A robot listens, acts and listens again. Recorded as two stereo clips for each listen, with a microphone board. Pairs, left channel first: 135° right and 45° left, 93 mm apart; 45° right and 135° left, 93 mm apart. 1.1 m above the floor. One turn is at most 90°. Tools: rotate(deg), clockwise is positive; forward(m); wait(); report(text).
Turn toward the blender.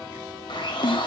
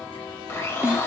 rotate(90)
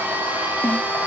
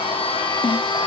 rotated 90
rotate(25)
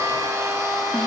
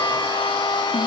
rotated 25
rotate(10)
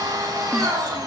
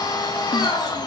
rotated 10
report("Found it: a blender, straight ahead.")